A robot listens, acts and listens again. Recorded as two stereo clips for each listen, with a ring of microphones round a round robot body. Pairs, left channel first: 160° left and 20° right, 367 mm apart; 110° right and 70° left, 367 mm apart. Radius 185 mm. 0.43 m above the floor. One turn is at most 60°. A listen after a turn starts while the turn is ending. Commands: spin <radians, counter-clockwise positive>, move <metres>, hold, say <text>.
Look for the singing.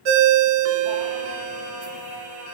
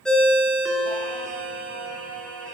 spin 1.05
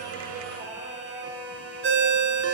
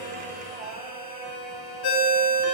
spin 0.87
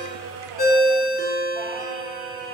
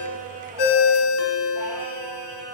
say Facing the singing, over 4 m away.